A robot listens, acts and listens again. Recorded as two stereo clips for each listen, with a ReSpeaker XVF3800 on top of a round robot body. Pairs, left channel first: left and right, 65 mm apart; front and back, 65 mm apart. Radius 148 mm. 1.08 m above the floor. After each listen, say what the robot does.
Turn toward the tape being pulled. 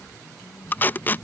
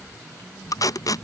Turn 25° left.
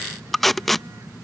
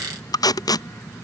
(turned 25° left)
Facing the tape being pulled.